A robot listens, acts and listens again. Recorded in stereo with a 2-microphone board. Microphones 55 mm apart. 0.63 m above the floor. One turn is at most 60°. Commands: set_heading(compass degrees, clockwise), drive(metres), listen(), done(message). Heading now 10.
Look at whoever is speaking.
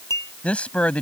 set_heading(350)
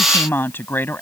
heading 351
set_heading(311)
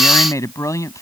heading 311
set_heading(251)
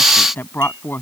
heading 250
set_heading(210)
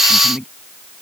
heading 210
done("Facing the woman speaking.")